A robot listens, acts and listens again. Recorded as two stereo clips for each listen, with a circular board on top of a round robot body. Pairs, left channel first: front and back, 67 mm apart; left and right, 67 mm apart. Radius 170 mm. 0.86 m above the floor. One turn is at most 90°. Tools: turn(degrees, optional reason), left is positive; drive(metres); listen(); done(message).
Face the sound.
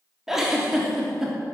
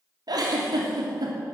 turn(degrees=-90, reason="The giggle: 95° right.")
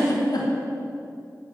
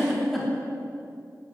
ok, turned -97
done("Facing the giggle, 2 to 4 m away.")